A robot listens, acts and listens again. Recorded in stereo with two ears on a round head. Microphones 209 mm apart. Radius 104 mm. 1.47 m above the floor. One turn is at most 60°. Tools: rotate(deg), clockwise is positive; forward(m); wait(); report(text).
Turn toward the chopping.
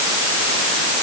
wait()
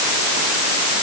wait()
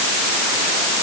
report("I can't make out chopping.")